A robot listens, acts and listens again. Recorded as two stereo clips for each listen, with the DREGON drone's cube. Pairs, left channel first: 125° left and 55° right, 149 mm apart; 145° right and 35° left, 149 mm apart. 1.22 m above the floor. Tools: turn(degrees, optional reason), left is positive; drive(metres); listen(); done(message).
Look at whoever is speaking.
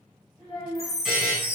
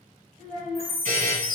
turn(degrees=70, reason="The child speaking: 70° left.")
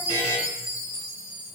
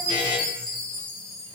listen()
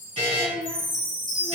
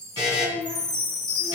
turn(degrees=20, reason="The child speaking is now 20° left.")
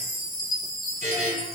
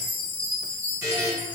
listen()
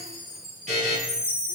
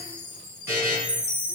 listen()
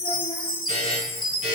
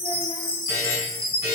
done("Facing where the child speaking came from. I can't hear it now.")